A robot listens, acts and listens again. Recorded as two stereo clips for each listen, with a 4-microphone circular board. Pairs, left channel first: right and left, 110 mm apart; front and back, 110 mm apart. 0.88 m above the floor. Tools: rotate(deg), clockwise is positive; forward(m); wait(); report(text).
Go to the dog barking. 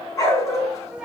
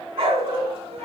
rotate(150)
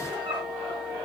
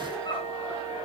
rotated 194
rotate(-45)
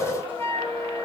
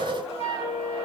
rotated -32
rotate(-15)
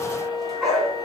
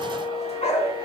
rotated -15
forward(1.0)
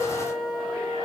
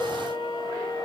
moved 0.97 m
wait()
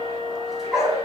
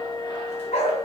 forward(1.0)
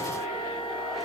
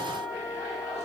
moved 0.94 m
wait()
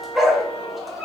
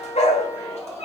forward(1.0)
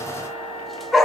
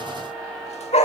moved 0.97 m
forward(1.0)
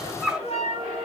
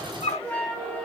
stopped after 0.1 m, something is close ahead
report("I am next to the dog barking.")